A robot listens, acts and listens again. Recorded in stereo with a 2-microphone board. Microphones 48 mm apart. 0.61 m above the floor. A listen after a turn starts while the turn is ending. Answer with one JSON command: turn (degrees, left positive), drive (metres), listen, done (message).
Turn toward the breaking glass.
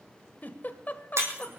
{"turn": -60}
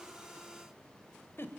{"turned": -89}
{"listen": true}
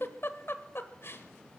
{"done": "I heard breaking glass, but can't make it out now. It was about 30° left or 30° right."}